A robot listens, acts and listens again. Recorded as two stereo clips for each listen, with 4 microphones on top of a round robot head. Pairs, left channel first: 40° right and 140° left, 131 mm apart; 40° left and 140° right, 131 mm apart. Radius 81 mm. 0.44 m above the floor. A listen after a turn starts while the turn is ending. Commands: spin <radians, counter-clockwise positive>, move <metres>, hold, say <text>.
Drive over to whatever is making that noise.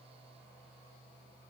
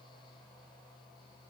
hold
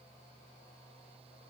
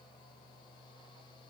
hold
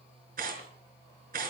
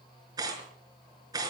spin 2.71
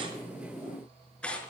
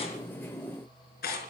spin 0.70
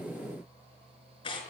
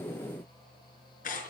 spin 0.26
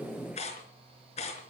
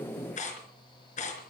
move 1.0
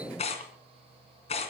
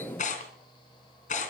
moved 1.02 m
move 1.0
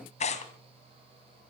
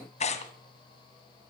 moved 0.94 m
move 1.0
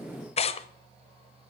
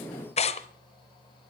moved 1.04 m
move 1.0
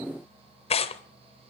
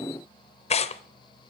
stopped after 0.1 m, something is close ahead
say I am next to the tearing paper.